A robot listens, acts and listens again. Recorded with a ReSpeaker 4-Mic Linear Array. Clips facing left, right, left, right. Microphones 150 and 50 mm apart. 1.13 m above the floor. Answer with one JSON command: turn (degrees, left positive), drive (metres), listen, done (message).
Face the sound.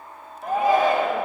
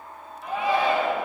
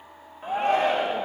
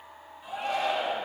{"turn": 40}
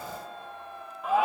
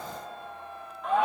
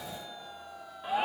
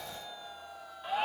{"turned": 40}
{"done": "Facing the shout, under 1 m away."}